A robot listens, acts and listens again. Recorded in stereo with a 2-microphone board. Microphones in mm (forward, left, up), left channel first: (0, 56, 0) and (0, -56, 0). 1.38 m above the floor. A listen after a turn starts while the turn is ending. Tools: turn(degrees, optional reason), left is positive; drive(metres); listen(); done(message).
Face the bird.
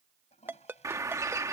turn(degrees=-30, reason="The bird: about 30° right or 150° right.")
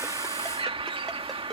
turn(degrees=-125, reason="So it is at 125° right.")
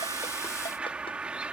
turn(degrees=-10, reason="The bird is now 10° right.")
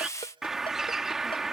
done("Facing the bird.")